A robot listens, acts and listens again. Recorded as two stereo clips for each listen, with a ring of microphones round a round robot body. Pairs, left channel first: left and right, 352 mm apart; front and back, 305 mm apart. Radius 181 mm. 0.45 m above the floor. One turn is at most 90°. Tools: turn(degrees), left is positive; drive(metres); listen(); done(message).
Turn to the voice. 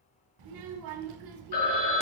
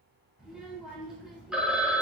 turn(degrees=-90)
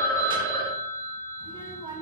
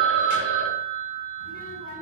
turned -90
turn(degrees=-15)
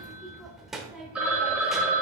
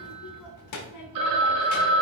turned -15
done("Found it: a child speaking, straight ahead.")